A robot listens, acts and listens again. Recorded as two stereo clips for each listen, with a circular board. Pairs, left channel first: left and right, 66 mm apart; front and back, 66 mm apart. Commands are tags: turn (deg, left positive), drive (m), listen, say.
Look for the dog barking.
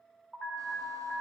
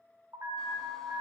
<listen/>
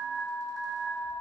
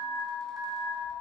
<listen/>
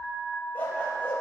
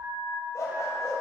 <turn deg="35"/>
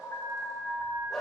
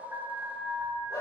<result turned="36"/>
<say>Found it: a dog barking, straight ahead, over 4 m away.</say>